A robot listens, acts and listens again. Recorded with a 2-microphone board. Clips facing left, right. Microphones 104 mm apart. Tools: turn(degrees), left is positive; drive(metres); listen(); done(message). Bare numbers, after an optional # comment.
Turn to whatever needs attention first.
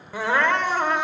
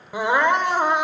# The crying: about 15° right or 165° right.
turn(-15)
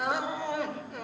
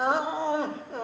# So it is at 150° right.
turn(-150)
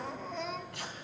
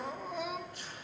# The crying is now 10° right.
turn(-10)
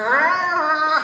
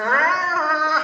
done("Found it: crying, straight ahead.")